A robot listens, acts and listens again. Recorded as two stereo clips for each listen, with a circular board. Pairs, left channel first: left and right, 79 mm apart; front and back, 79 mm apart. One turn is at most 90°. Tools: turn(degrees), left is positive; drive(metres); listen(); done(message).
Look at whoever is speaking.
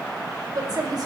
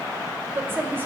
turn(degrees=-90)
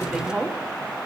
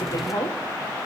turn(degrees=-10)
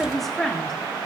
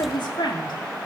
done("Found it: a woman speaking, straight ahead.")